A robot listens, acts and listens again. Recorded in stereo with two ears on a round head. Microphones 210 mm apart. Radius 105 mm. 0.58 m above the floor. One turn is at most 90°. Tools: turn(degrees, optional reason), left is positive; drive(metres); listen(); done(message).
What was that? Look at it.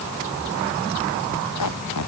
turn(degrees=90)
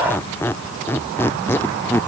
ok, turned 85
turn(degrees=10, reason="So it is at 10° left.")
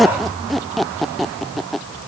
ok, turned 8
done("Found it: a squeak, straight ahead.")